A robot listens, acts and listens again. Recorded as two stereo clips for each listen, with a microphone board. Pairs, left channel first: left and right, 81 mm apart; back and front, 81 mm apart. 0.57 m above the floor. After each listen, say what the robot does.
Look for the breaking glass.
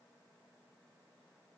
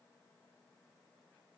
Keep listening.
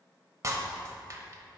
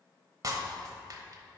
Turn 40° right.
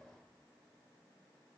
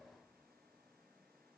I heard breaking glass from this way, but can't make it out now.